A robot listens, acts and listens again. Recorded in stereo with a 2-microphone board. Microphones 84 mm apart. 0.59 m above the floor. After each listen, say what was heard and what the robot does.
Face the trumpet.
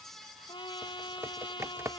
Turn 90° left.
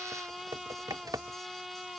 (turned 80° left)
Found it: a trumpet, straight ahead.